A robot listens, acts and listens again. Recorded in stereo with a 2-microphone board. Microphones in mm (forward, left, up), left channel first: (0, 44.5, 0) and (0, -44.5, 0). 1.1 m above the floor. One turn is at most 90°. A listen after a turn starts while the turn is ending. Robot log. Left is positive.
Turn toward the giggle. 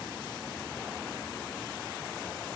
cmd idle
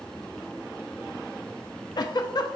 note: The giggle: about 50° left or 130° left.
cmd yaw +50
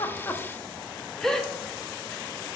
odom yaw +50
end: Found it: a giggle, straight ahead.